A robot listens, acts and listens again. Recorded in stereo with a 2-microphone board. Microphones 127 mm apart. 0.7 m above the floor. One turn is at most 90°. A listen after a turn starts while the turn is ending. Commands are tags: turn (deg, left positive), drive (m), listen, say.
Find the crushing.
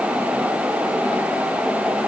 <listen/>
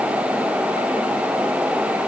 <listen/>
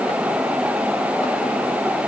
<say>I can't make out crushing.</say>